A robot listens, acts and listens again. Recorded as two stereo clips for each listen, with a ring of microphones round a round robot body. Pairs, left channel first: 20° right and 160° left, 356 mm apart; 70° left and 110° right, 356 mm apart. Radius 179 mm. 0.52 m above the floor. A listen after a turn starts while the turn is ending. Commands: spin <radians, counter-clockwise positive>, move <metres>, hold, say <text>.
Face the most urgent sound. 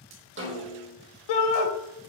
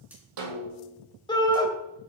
spin -0.17
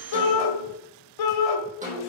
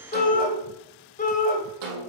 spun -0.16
say Facing the shout, 2 to 4 m away.